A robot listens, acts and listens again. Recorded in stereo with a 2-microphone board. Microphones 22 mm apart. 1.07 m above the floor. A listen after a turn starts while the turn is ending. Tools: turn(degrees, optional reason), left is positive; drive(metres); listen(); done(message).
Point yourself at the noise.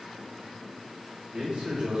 turn(degrees=-50, reason="The man speaking: about 50° right or 130° right.")
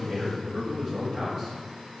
done("Found it: a man speaking, straight ahead.")